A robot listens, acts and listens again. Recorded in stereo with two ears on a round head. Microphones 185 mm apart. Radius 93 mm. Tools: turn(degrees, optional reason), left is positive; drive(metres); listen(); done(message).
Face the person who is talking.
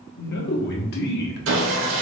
turn(degrees=50, reason="The man speaking: about 50° left or 130° left.")
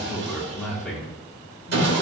done("Found it: a man speaking, straight ahead.")